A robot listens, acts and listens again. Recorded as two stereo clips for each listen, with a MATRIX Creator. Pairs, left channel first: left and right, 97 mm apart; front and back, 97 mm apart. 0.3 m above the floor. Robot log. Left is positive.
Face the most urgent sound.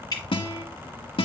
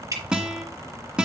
cmd idle
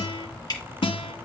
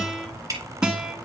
cmd idle
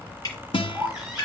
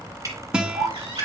note: The baby crying: 175° right.
cmd yaw -175
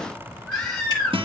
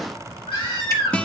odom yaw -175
note: The baby crying is now 10° left.
cmd yaw +10
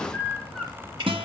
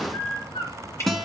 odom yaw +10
end: Found it: a baby crying, straight ahead.